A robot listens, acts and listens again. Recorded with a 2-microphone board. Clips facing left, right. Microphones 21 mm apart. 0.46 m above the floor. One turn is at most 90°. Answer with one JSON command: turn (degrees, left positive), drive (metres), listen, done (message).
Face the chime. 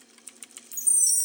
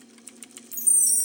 {"turn": 15}
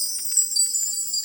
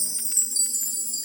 {"turn": 90}
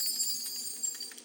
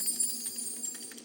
{"turn": 65}
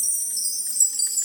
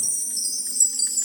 {"done": "Found it: a chime, straight ahead."}